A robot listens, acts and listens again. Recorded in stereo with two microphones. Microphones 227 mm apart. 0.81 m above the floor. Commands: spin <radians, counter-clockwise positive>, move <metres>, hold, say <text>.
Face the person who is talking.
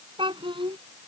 spin -0.35
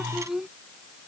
say Facing the child speaking.